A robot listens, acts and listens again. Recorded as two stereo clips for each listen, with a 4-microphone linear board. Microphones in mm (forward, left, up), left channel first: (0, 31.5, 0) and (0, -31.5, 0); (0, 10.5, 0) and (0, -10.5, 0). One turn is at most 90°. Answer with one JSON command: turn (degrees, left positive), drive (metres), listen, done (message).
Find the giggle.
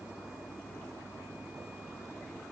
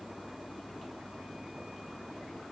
{"listen": true}
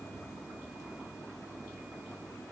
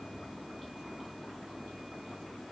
{"listen": true}
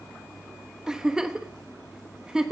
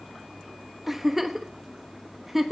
{"turn": -30}
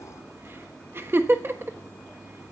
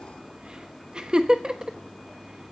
{"turn": -90}
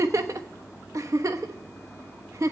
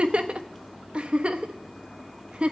{"turn": -65}
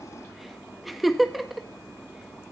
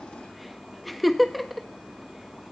{"done": "Found it: a giggle, straight ahead, 1 to 2 m away."}